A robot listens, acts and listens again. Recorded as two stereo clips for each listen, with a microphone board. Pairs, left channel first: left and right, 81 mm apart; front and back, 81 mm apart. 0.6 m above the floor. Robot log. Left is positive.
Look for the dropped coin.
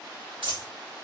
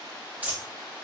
note: The dropped coin: 110° right.
cmd yaw -110
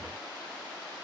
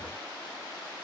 end: I heard a dropped coin from this way, but can't make it out now.